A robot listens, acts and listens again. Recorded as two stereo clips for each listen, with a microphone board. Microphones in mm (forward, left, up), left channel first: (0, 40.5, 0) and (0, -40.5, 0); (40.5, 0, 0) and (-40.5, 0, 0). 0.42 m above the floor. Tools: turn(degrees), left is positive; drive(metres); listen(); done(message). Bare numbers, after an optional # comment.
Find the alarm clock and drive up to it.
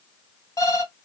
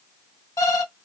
# The alarm clock: 50° left.
turn(50)
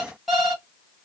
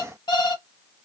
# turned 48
drive(1.0)
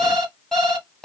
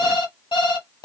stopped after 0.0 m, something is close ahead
done("Blocked. The alarm clock is further on, straight ahead.")